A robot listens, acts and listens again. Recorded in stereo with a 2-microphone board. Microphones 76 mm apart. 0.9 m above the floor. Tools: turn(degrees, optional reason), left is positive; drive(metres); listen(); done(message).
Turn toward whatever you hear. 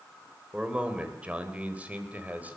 turn(degrees=-20, reason="The man speaking: about 20° right or 160° right.")
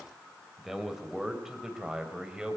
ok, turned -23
turn(degrees=-30)
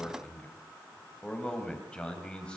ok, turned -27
turn(degrees=15, reason="So it is at 15° left.")
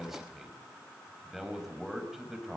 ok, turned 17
done("Found it: a man speaking, straight ahead.")